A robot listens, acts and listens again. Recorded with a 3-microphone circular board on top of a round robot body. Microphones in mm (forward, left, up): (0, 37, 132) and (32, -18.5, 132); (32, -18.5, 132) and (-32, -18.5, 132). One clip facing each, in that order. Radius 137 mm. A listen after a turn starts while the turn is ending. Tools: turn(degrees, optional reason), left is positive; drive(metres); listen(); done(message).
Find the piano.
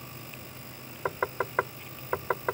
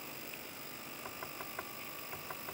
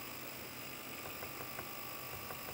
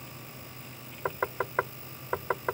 listen()
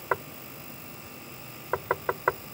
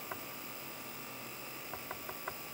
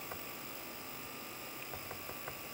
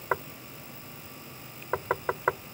listen()
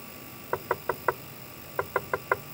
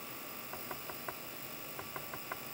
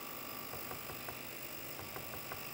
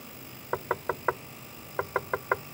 done("I can't make out a piano to turn to.")